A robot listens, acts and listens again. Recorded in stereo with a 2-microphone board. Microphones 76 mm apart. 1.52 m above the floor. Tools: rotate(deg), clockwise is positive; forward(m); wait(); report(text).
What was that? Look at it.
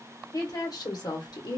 rotate(-60)
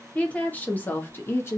rotate(-30)
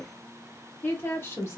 rotate(-30)
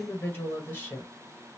rotate(-20)
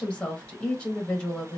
report("Found it: a woman speaking, straight ahead, 1 to 2 m away.")